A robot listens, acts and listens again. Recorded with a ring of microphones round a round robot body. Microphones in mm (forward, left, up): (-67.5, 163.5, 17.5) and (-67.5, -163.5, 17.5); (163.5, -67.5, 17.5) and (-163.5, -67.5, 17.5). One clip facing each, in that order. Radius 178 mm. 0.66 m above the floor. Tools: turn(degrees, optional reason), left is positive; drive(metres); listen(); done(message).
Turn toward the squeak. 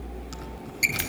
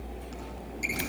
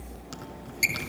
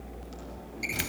turn(degrees=35, reason="The squeak: 35° left.")
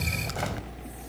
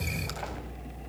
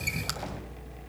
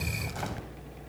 listen()
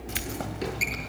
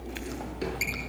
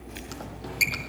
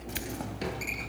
done("Facing the squeak, over 4 m away.")